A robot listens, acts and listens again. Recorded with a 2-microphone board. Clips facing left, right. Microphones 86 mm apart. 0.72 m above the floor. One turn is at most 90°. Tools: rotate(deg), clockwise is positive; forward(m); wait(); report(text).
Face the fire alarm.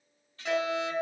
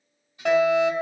rotate(60)
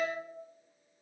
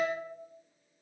rotate(10)
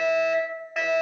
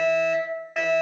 report("Facing the fire alarm.")